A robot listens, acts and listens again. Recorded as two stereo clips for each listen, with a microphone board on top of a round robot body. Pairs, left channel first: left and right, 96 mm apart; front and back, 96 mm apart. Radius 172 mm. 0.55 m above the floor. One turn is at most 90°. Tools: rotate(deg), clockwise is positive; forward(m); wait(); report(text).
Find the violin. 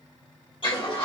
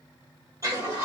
wait()
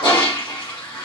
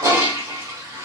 wait()
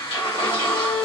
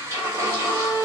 rotate(-85)
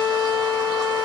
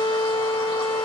rotate(-10)
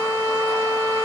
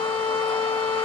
report("Facing the violin, 2 to 4 m away.")